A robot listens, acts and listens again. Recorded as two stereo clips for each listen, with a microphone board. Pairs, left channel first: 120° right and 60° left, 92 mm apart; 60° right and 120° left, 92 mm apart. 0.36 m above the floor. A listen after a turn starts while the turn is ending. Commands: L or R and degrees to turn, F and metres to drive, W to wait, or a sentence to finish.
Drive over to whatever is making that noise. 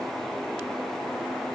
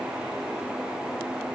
W
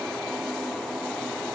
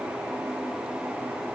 W
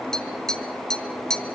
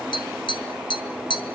R40
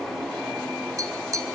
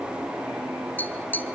L10
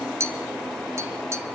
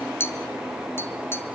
F1.0
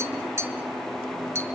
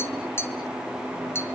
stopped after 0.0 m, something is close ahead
Something is in my way. I am facing the tapping but have not reached it.